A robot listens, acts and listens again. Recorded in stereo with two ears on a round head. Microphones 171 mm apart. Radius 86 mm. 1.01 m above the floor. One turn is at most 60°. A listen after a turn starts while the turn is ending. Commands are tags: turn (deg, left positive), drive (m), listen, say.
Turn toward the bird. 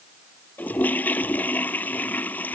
<listen/>
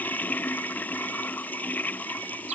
<listen/>
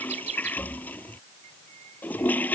<turn deg="-40"/>
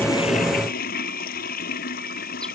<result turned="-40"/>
<listen/>
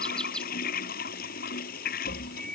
<say>Facing the bird.</say>